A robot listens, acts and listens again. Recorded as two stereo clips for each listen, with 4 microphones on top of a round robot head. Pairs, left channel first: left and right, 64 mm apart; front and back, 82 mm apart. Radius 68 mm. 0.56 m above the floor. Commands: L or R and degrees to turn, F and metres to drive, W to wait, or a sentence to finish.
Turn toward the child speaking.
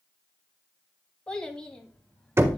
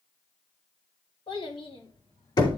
L10
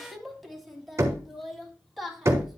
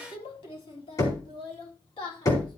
Found it: a child speaking, straight ahead.